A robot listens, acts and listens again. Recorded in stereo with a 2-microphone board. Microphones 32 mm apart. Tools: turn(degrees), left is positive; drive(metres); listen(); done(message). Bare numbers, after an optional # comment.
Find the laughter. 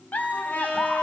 # The laughter: about 60° left or 120° left.
turn(60)
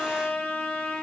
listen()
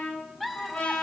done("Facing the laughter.")